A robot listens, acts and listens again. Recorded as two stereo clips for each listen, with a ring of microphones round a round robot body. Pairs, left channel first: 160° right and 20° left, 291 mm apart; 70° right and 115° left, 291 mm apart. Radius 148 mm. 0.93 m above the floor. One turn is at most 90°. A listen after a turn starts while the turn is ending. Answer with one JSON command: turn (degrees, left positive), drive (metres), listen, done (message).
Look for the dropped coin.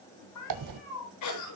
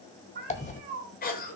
{"done": "Facing the dropped coin."}